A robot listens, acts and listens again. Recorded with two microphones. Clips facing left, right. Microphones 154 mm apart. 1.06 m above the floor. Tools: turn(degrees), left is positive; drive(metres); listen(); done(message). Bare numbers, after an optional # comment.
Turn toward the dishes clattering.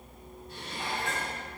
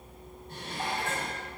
# The dishes clattering: about 50° right or 130° right.
turn(-50)
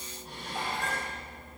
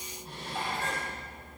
done("Found it: dishes clattering, straight ahead, over 4 m away.")